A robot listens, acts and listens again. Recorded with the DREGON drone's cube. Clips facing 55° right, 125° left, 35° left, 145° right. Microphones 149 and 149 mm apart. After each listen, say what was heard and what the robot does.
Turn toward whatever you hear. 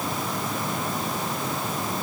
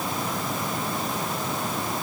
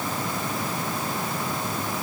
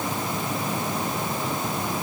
Keep listening.
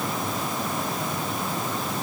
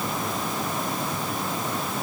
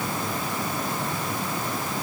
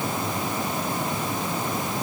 Keep listening.
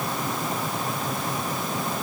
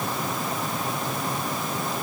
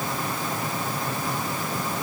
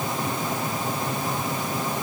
I can't make out anything.